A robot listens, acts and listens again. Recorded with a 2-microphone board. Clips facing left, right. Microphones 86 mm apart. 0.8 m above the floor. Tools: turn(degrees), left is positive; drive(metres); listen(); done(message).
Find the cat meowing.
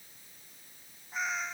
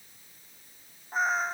turn(degrees=-45)
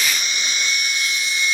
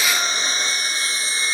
listen()
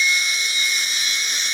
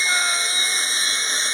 listen()
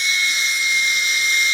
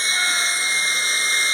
done("I heard a cat meowing, but can't make it out now. It was about straight ahead or 90° right.")